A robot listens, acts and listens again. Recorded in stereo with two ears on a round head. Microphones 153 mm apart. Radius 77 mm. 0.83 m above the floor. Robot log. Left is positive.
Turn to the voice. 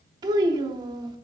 note: The child speaking: about 25° right or 155° right.
cmd yaw -25
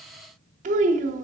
note: So it is at 135° right.
cmd yaw -135
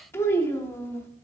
note: The child speaking is now 15° left.
cmd yaw +15
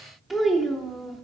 end: Found it: a child speaking, straight ahead, under 1 m away.